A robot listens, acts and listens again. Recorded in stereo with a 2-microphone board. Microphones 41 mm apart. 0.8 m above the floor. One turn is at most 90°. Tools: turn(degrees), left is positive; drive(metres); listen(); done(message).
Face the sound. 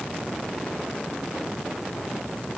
listen()
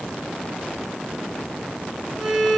turn(degrees=30)
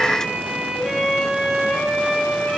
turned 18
turn(degrees=-15)
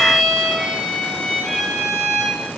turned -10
done("Found it: a violin, straight ahead, 1 to 2 m away.")